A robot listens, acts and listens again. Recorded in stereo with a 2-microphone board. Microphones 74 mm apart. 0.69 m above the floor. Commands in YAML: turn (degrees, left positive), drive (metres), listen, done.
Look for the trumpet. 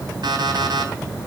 listen: true
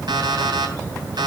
listen: true
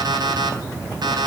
done: "I can't make out a trumpet, only an alarm clock."